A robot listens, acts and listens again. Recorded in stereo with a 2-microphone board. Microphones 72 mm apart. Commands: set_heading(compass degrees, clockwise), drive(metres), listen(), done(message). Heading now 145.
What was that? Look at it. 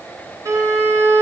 set_heading(195)
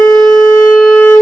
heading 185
set_heading(195)
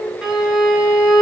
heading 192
done("Facing the violin, 1 to 2 m away.")